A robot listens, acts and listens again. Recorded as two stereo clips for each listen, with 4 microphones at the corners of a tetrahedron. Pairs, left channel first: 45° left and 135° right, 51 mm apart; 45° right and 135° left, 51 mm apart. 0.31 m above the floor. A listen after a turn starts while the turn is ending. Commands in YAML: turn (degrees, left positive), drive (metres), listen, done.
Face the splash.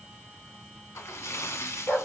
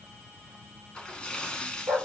turn: 25
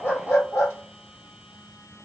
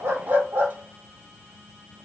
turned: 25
done: "I heard a splash from this way, but can't make it out now."